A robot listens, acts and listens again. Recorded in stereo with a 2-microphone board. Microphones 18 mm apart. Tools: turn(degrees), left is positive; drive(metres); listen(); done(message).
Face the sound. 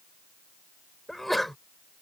turn(degrees=30)
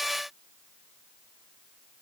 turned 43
listen()
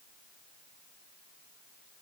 done("I heard a sneeze, but can't make it out now. It was about 40° right or 135° left.")